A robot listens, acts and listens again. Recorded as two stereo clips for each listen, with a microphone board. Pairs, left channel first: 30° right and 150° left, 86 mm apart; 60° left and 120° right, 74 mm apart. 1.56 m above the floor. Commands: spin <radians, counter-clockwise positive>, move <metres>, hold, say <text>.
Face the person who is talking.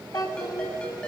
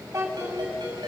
spin -1.22
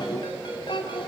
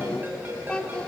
spin -0.26
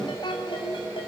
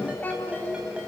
say Facing the child speaking.